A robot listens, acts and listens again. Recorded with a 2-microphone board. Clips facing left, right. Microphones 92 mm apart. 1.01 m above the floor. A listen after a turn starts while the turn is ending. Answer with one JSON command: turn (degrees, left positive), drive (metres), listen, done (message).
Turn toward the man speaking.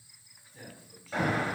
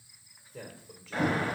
{"turn": -90}
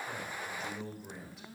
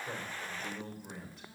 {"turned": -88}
{"done": "Found it: a man speaking, straight ahead."}